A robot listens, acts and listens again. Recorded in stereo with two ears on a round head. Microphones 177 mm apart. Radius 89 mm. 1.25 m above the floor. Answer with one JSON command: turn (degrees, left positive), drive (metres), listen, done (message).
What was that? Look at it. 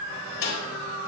{"turn": 90}
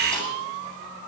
{"listen": true}
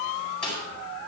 {"done": "Found it: a snare drum, straight ahead."}